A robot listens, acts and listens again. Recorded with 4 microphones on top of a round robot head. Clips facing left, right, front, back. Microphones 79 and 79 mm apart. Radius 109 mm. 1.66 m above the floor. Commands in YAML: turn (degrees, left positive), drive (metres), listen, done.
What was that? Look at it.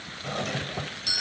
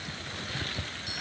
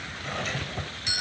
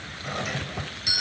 turn: 100
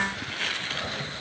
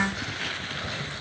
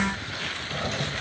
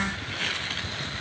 turn: 15
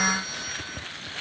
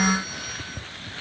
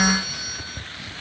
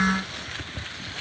listen: true
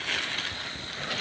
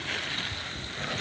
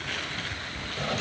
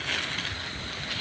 listen: true
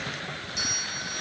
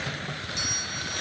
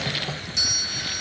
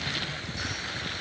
done: "Found it: a doorbell, straight ahead."